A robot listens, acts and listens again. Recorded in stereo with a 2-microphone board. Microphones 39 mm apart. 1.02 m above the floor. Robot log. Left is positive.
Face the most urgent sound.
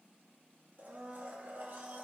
cmd idle
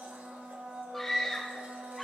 cmd yaw +30
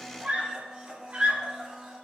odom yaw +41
note: So it is at 35° right.
cmd yaw -35
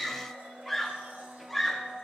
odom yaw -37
end: Facing the scream, 2 to 4 m away.